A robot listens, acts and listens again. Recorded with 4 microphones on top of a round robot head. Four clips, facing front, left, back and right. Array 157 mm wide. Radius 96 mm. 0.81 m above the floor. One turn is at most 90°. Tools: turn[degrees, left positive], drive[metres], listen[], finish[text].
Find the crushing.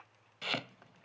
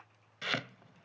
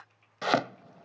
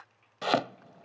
Action: listen[]
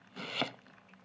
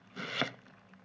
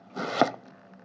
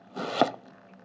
Action: listen[]
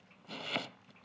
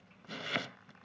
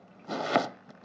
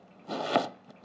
Action: finish[I can't make out crushing, only chopping.]